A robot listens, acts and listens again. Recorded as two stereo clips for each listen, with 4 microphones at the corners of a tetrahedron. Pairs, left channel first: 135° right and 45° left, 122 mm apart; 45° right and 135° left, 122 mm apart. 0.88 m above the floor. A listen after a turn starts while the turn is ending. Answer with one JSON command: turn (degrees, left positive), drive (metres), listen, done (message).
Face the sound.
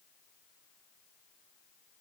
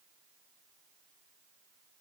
{"listen": true}
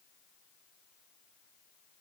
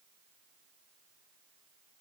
{"listen": true}
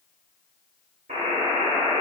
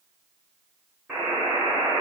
{"turn": 50}
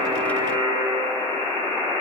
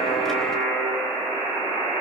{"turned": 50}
{"done": "Facing the buzzer, 1 to 2 m away."}